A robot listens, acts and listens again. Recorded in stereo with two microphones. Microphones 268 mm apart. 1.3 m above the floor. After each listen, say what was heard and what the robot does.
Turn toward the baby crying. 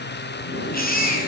The baby crying: about 35° left or 145° left. Turn 35° left.
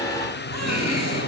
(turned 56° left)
Keep listening.
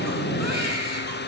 Keep listening.
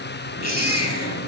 So it is at 90° left. Turn 90° left.
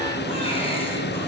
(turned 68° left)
Nothing new. It was at 20° left. Turn 20° left.
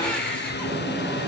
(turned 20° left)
Keep listening.
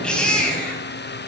Found it: a baby crying, straight ahead.